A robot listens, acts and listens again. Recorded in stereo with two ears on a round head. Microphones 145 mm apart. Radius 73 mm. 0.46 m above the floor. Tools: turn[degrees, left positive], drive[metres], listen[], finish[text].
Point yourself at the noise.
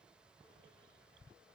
Action: listen[]
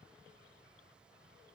Action: listen[]
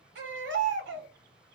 Action: turn[-90]
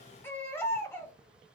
Thought: So it is at 15° left.
Action: turn[15]
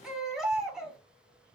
Action: finish[Facing the baby crying.]